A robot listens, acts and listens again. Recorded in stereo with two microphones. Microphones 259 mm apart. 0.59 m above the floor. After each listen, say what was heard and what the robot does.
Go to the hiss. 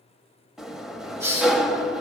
Turn 30° right.
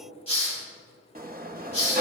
So it is at 25° left. Turn 25° left.
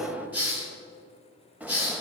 Drive 1.0 m forward.
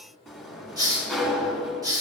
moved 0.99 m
The hiss is now 15° right. Turn 15° right.
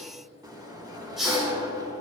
Drive 1.0 m forward.
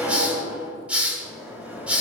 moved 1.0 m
Drive 1.0 m forward.
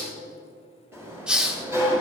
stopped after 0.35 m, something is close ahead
Arrived at the hiss, straight ahead.